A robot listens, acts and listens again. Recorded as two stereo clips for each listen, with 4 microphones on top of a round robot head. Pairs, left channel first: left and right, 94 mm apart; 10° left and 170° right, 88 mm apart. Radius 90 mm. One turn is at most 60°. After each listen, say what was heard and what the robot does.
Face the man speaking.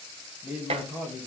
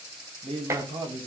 The man speaking: 160° right. Turn 60° right.
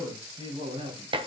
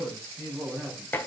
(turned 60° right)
The man speaking is now 105° right. Turn 60° right.
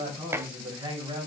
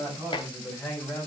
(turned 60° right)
The man speaking is now 60° right. Turn 60° right.
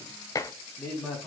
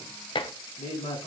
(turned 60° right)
Found it: a man speaking, straight ahead, over 4 m away.